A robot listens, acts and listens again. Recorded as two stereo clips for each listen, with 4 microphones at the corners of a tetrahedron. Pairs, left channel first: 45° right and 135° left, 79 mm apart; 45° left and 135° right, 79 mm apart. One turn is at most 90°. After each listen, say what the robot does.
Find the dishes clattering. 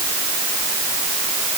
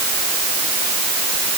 Keep listening.
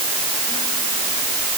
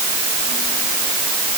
Keep listening.
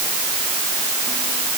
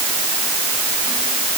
I can't make out dishes clattering to turn to.